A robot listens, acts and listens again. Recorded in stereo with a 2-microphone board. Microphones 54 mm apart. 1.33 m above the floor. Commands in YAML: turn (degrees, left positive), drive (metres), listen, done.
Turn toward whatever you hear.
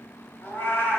turn: 40
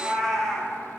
done: "Facing the cat meowing, 1 to 2 m away."